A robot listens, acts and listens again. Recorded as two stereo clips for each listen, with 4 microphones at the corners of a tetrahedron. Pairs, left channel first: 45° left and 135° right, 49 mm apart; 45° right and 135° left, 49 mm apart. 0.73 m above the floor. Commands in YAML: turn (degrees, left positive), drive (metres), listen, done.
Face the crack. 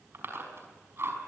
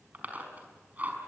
listen: true
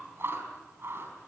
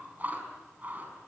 listen: true
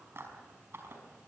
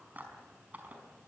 done: "I can't make out a crack to turn to."